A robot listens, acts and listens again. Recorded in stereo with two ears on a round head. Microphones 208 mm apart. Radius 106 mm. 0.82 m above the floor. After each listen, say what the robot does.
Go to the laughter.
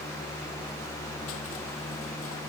Keep listening.
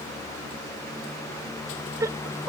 Turn 30° right.
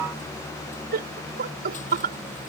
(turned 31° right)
Turn 135° right.
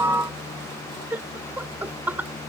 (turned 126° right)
Turn 10° right.
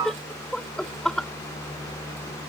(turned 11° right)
Drive 1.0 m forward.
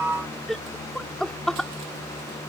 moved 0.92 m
Drive 1.0 m forward.
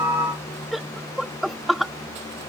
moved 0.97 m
Drive 1.0 m forward.
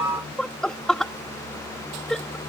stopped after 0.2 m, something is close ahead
Arrived at the laughter, straight ahead.